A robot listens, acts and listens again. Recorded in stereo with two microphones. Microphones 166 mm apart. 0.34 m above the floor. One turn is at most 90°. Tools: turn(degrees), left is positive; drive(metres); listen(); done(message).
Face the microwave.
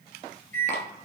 turn(degrees=-55)
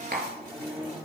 turn(degrees=-10)
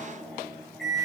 done("Facing the microwave.")